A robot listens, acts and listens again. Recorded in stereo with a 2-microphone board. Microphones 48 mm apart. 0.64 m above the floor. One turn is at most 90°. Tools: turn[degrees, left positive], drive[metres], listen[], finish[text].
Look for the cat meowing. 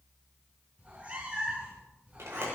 Thought: The cat meowing: about 25° right or 155° right.
Action: turn[-25]
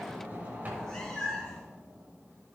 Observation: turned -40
Thought: So it is at 15° left.
Action: turn[15]
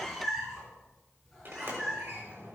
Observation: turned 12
Action: finish[Facing the cat meowing, over 4 m away.]